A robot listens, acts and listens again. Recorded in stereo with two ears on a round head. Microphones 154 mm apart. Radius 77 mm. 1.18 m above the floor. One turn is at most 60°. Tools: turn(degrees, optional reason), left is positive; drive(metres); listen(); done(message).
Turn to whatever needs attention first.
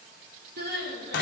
turn(degrees=-60, reason="The crying: about 65° right or 115° right.")
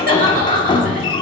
turn(degrees=-55, reason="So it is at 55° right.")
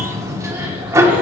listen()
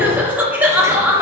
turn(degrees=-10, reason="The crying is now 10° right.")
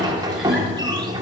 listen()
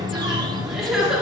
done("Found it: crying, straight ahead.")